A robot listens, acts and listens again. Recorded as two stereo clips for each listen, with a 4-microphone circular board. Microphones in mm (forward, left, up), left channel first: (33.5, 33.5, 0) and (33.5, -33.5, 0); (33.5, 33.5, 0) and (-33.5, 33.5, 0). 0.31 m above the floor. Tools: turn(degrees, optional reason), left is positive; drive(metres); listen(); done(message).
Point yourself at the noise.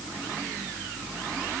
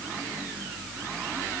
listen()
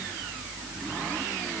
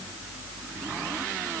listen()
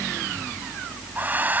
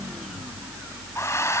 turn(degrees=-35, reason="The hair dryer: 35° right.")
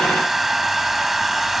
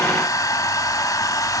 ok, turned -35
done("Found it: a hair dryer, straight ahead.")